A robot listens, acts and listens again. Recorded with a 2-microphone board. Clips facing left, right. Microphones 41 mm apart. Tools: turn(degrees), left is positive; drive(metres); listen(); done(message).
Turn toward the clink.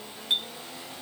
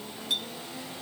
turn(degrees=35)
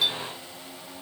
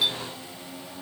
listen()
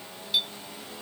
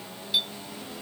done("Facing the clink.")